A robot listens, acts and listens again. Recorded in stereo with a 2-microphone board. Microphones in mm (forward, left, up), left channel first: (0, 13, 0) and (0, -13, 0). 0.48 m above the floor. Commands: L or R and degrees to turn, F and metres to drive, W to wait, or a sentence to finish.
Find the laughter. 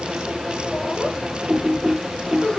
L25
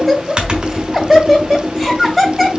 Facing the laughter, 2 to 4 m away.